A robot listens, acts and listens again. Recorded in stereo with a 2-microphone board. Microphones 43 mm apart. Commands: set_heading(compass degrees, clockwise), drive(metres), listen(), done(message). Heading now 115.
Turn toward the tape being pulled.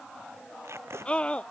set_heading(205)
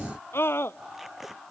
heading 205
done("Facing the tape being pulled.")